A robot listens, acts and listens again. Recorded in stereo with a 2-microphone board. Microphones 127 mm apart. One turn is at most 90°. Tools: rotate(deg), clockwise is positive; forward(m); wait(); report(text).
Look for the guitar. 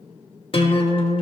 rotate(-45)
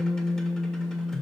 report("Found it: a guitar, straight ahead.")